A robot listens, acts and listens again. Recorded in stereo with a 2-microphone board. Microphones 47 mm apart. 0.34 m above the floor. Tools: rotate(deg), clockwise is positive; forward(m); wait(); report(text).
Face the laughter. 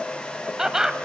rotate(30)
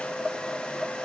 wait()
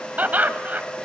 rotate(130)
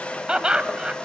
rotate(25)
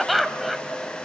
report("Found it: laughter, straight ahead, 1 to 2 m away.")